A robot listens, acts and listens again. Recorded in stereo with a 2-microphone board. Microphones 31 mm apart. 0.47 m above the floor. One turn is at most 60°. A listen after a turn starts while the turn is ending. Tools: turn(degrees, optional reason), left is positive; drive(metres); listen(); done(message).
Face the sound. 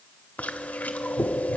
turn(degrees=60, reason="The chewing: about 60° left or 120° left.")
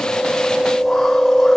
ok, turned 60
turn(degrees=10, reason="So it is at 10° left.")
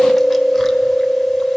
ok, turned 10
done("Facing the chewing, under 1 m away.")